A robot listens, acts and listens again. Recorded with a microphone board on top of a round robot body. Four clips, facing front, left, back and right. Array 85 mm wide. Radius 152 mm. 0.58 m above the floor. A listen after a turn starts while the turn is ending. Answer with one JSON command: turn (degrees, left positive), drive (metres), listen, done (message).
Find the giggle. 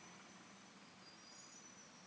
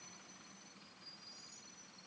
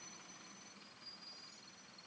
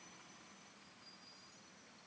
{"listen": true}
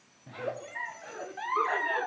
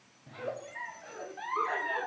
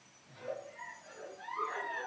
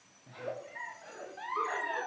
{"done": "Facing the giggle, 1 to 2 m away."}